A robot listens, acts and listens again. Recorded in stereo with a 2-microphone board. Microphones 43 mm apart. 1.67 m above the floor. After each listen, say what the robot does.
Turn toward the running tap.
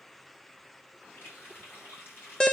Turn 55° left.
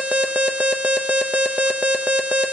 Keep listening.
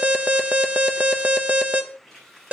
Facing the running tap, over 4 m away.